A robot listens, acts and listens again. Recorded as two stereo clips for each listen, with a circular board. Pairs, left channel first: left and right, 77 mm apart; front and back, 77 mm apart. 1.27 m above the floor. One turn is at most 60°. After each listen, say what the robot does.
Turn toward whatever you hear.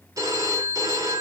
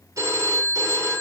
Turn 60° right.
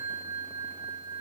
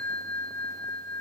Turn 60° right.
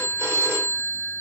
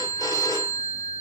Turn 35° right.
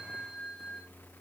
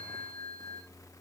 Found it: a phone ringing, straight ahead, 1 to 2 m away.